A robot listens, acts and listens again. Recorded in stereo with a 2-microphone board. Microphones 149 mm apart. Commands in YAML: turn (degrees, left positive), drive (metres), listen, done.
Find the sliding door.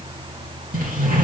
turn: -70
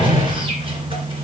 turn: -35
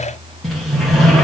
done: "Found it: a sliding door, straight ahead, 2 to 4 m away."